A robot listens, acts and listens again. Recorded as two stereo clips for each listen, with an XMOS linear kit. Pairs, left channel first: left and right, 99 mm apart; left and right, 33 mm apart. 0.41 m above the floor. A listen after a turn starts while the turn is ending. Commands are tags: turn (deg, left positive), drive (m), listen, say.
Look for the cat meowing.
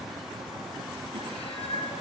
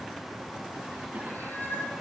<turn deg="90"/>
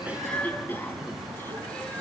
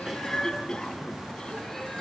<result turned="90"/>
<listen/>
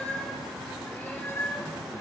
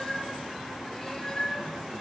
<turn deg="20"/>
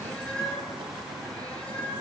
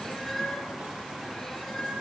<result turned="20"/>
<turn deg="10"/>
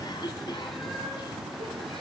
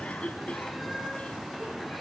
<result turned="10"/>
<say>Facing the cat meowing, over 4 m away.</say>